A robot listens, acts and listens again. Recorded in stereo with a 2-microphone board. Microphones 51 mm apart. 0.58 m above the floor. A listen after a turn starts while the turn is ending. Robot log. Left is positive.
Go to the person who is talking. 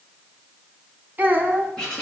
note: The child speaking: about 30° right or 150° right.
cmd yaw -30
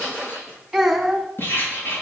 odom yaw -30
cmd fwd 1.0
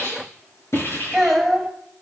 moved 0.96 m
cmd fwd 1.0
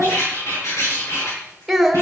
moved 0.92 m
cmd fwd 1.0
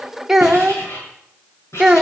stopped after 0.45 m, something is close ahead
note: The child speaking is now 10° right.
cmd yaw -10
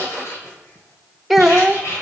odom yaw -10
end: I am next to the child speaking.